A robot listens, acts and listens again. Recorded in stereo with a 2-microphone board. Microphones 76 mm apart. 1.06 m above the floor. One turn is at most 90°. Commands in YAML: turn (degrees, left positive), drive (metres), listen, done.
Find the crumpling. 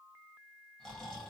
listen: true
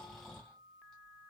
listen: true
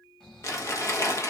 turn: 40
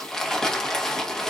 turn: 10
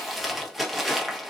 done: "Found it: crumpling, straight ahead."